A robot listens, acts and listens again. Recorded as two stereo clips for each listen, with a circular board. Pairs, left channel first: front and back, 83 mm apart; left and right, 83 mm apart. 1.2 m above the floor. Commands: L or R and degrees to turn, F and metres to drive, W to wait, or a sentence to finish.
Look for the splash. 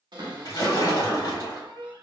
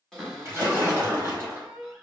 R30
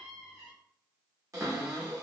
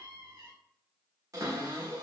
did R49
L20
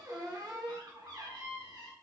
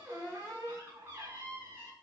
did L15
Facing where the splash came from. I can't hear it now.